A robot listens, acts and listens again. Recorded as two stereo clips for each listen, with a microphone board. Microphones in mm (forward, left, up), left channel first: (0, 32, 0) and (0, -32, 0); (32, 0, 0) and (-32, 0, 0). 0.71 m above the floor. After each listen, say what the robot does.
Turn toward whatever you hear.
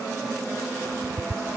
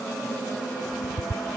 Turn 90° right.
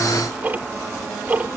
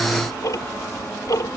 Turn 25° right.
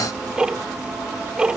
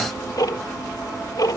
Turn 10° right.
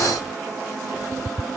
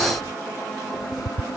Facing the ticking.